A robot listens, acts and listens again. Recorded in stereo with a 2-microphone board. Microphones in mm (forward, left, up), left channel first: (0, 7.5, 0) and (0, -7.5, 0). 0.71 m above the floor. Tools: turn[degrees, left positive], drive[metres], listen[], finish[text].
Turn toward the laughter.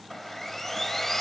Action: listen[]
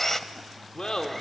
Thought: The laughter: about 65° left or 115° left.
Action: turn[65]
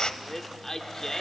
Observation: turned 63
Thought: So it is at 35° left.
Action: turn[35]
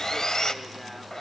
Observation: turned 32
Action: listen[]
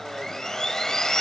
Action: listen[]
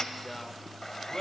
Thought: The laughter is now 35° left.
Action: turn[35]
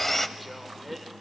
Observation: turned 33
Action: listen[]
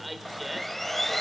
Action: finish[Facing the laughter.]